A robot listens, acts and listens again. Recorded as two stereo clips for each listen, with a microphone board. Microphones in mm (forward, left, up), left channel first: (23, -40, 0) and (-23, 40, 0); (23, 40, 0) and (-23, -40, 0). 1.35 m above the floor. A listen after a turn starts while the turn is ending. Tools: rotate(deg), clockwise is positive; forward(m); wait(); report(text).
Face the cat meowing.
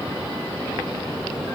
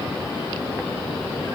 wait()
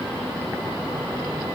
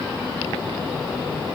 wait()
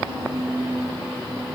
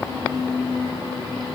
report("I can't make out a cat meowing.")